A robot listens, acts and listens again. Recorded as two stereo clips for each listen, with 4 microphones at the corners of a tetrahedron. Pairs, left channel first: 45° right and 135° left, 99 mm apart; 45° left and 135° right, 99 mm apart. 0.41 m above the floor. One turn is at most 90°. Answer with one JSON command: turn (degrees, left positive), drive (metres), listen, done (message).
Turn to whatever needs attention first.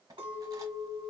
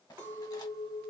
{"listen": true}
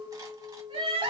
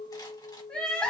{"turn": 90}
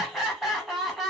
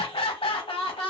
{"turn": 45}
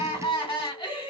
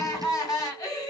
{"turn": -10}
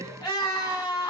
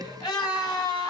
{"done": "Found it: crying, straight ahead, 1 to 2 m away."}